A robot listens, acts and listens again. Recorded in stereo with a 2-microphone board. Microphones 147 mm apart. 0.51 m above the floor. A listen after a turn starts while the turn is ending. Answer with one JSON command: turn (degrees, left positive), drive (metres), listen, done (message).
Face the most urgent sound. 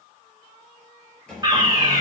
{"turn": -25}
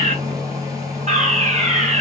{"turn": -125}
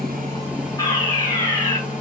{"turn": 25}
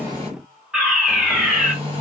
{"done": "Facing the fire alarm."}